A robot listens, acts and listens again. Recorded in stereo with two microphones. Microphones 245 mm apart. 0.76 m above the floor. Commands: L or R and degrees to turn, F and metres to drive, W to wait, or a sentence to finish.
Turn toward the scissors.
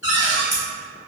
L35
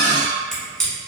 Found it: scissors, straight ahead.